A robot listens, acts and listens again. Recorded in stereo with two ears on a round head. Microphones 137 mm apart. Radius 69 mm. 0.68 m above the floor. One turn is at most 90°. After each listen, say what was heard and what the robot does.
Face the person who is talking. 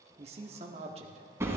The man speaking: about 40° right or 140° right. Turn 40° right.
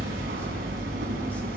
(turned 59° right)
Keep listening.
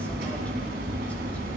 Keep listening.
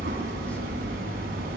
I heard a man speaking, but can't make it out now. It was about 20° left or 80° right.